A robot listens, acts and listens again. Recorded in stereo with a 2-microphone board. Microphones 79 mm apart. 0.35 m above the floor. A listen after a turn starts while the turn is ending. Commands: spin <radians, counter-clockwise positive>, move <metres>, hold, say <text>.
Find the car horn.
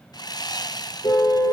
spin 1.22
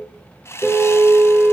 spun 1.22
say Facing the car horn.